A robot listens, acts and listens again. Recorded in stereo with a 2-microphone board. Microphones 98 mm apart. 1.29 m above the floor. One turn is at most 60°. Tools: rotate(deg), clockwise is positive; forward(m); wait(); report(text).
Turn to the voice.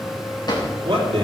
rotate(60)
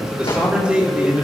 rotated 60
rotate(15)
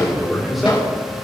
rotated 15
report("Found it: a man speaking, straight ahead.")